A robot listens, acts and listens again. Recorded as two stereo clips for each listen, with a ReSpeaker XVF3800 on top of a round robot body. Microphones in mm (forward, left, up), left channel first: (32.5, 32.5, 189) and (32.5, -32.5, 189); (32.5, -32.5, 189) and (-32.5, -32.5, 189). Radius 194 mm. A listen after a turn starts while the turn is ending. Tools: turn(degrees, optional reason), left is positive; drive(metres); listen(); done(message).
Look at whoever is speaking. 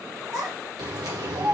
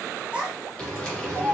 turn(degrees=-100, reason="The child speaking: 100° right.")
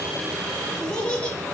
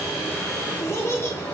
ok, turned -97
turn(degrees=20, reason="The child speaking is now 20° left.")
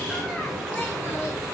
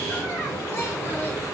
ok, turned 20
listen()
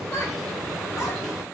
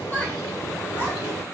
listen()
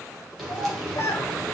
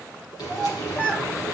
turn(degrees=75, reason="The child speaking is now 75° left.")
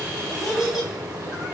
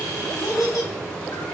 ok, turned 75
done("Facing the child speaking, 1 to 2 m away.")